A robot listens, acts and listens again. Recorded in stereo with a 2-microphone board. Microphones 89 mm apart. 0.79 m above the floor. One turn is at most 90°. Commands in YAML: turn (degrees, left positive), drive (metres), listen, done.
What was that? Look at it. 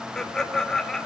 turn: 30
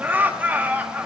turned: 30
turn: -25
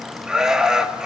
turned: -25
turn: -10
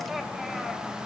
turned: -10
listen: true
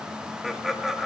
done: "Facing the laughter."